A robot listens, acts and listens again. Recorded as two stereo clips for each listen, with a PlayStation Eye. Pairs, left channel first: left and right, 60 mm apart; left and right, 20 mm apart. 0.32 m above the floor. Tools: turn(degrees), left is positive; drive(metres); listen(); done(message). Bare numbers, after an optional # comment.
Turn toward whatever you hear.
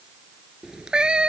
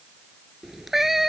# The cat meowing: about 20° right or 160° right.
turn(-20)
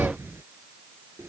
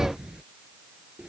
# So it is at 140° right.
turn(-140)
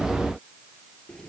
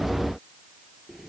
listen()
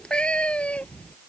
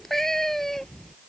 # The cat meowing is now 20° left.
turn(20)
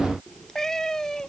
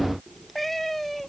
# The cat meowing is now 10° left.
turn(10)
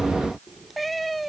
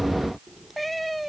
done("Found it: a cat meowing, straight ahead.")